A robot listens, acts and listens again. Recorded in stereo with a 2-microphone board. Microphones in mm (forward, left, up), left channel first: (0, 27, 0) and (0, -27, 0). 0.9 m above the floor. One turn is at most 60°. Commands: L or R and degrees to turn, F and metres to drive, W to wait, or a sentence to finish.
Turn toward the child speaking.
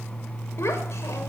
L60
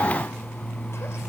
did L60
W
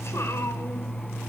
L60
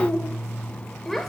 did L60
Found it: a child speaking, straight ahead.